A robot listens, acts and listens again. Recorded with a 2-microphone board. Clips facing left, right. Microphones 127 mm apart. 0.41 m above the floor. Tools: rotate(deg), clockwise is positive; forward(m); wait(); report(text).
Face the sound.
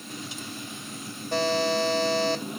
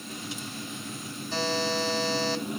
rotate(-55)
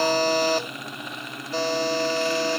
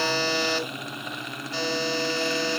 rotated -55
rotate(-50)
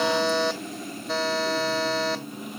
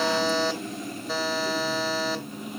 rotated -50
report("Facing the buzzer.")